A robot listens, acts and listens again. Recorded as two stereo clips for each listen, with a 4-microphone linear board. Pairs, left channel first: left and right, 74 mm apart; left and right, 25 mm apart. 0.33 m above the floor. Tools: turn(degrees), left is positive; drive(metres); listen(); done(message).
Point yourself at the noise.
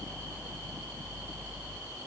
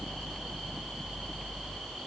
listen()
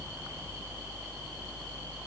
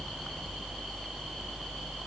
listen()
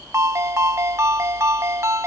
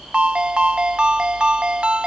turn(degrees=-40)
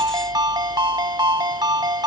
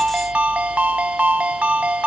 turn(degrees=-95)
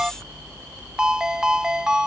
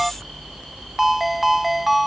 turn(degrees=-10)
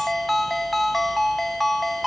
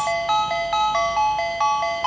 done("Facing the ringtone.")